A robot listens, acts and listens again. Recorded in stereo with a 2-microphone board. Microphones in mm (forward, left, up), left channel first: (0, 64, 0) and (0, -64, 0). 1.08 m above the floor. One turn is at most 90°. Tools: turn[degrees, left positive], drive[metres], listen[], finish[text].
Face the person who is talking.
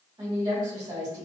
Thought: The woman speaking: about 35° right or 145° right.
Action: turn[-35]
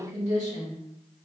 Thought: So it is at 105° right.
Action: turn[-90]
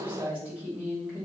Thought: The woman speaking is now 15° right.
Action: turn[-15]
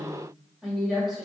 Action: finish[Facing the woman speaking, 1 to 2 m away.]